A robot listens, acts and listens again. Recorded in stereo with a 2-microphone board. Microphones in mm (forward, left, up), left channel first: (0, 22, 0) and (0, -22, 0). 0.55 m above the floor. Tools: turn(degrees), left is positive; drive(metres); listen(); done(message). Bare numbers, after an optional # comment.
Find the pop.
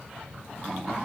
listen()
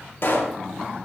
# The pop: about 60° left or 120° left.
turn(60)
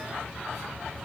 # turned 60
listen()
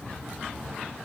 done("I heard a pop, but can't make it out now. It was about straight ahead or 60° left.")